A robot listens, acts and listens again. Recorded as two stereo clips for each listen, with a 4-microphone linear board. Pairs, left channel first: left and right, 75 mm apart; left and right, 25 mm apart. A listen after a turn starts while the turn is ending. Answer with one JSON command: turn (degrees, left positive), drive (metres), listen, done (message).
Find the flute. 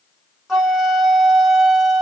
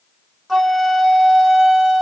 {"turn": -30}
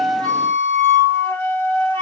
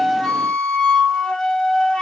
{"turn": 25}
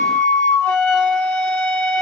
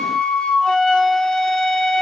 {"turn": 15}
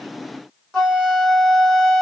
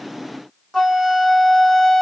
{"done": "Found it: a flute, straight ahead, 1 to 2 m away."}